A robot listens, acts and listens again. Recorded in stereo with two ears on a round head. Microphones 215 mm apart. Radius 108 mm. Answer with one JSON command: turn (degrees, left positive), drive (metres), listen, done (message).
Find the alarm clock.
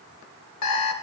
{"turn": 75}
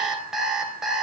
{"done": "Facing the alarm clock, 1 to 2 m away."}